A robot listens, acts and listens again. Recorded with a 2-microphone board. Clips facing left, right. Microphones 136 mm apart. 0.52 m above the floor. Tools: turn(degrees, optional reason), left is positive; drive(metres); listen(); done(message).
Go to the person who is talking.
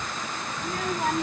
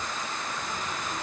turn(degrees=90)
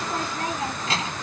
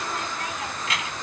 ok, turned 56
turn(degrees=30, reason="So it is at 30° left.")
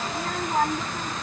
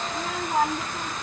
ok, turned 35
drive(metres=1.0)
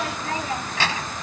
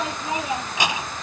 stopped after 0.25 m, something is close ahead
turn(degrees=-15, reason="The child speaking is now 15° right.")
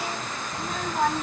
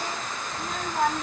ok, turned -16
done("Blocked. The child speaking is further on, straight ahead.")